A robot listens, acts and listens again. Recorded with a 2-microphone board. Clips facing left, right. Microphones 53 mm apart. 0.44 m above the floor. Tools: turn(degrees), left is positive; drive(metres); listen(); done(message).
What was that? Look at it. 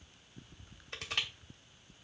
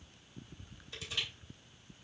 turn(degrees=50)
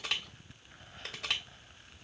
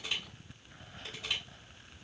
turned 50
turn(degrees=75)
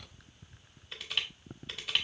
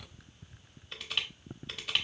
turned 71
done("Facing the crushing, 1 to 2 m away.")